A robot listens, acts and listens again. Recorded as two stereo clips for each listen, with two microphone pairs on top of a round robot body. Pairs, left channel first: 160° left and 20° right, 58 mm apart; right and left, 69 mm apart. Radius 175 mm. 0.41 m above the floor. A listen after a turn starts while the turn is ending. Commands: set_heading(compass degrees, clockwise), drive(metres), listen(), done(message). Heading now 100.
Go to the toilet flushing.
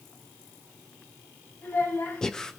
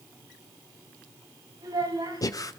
listen()
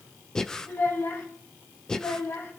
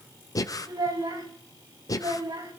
listen()
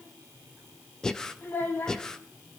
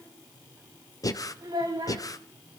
done("I can't make out a toilet flushing to turn to.")